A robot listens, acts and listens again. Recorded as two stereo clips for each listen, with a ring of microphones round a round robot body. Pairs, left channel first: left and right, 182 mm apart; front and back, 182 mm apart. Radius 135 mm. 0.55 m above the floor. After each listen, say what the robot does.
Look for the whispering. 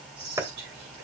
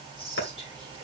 Turn 70° right.
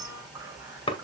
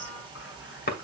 Keep listening.
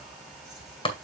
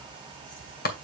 Keep listening.
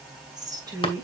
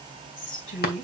Turn 20° right.
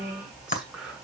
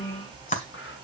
Facing the whispering, over 4 m away.